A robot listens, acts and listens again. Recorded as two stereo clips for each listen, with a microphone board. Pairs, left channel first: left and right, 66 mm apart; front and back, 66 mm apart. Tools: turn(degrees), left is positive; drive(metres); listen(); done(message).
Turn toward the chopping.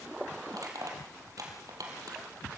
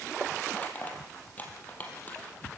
listen()
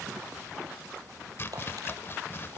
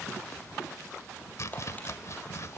turn(degrees=40)
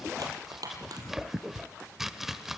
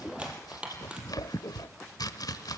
done("Found it: chopping, straight ahead.")